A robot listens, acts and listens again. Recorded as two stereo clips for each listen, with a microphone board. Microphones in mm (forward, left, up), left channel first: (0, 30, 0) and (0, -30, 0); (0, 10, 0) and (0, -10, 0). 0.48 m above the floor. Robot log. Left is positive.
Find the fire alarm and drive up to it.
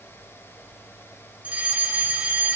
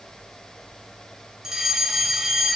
note: The fire alarm: about 25° right or 155° right.
cmd yaw -25
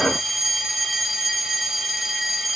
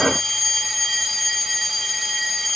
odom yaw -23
cmd fwd 1.0
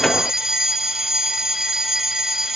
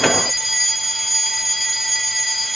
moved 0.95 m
note: The fire alarm is now 10° right.
cmd yaw -10
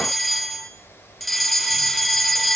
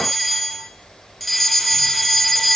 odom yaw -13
cmd fwd 1.0
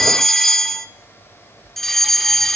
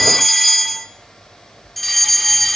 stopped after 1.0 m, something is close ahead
note: The fire alarm is now 10° left.
cmd yaw +10
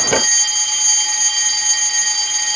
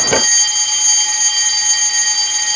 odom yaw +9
end: I am next to the fire alarm.